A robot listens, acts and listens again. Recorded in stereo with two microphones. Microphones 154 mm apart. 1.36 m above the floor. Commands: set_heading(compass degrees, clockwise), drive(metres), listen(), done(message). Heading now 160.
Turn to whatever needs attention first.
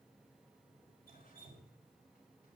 listen()
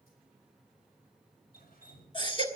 set_heading(130)
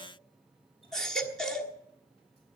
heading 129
done("Found it: a baby crying, straight ahead, 1 to 2 m away.")